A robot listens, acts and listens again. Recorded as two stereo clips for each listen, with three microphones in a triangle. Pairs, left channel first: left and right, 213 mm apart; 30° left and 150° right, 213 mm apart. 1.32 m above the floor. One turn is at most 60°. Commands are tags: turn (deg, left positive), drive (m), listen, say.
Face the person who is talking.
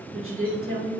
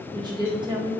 <turn deg="-60"/>
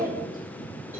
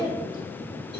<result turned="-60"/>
<turn deg="-40"/>
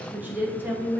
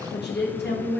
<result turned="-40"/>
<turn deg="-10"/>
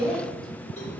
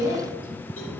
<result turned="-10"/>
<say>Facing the woman speaking.</say>